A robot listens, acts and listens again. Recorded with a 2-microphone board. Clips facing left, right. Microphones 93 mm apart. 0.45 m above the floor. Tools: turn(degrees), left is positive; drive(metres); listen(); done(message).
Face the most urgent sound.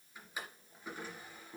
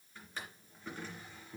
listen()
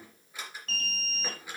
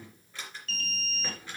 turn(degrees=40)
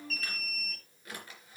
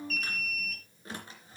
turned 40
done("Found it: an alarm, straight ahead, 2 to 4 m away.")